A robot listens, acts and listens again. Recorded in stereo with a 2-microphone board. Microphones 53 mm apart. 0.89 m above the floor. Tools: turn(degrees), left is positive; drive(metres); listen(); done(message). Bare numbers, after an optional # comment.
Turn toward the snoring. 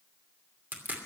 listen()
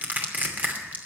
listen()
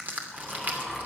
turn(-30)
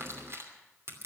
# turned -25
listen()
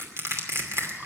listen()
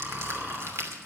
# So it is at 150° right.
turn(-150)
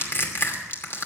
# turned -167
# Nothing new. It was at 15° left.
turn(15)
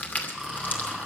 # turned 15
done("Facing the snoring.")